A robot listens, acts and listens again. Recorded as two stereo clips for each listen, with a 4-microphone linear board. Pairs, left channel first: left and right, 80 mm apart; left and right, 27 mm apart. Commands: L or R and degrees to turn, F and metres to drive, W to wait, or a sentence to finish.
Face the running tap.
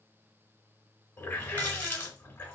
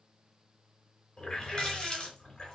L25
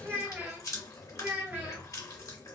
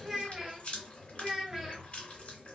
L125
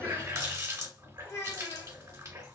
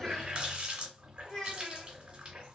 R40
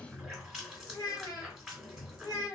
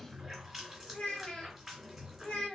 Found it: a running tap, straight ahead.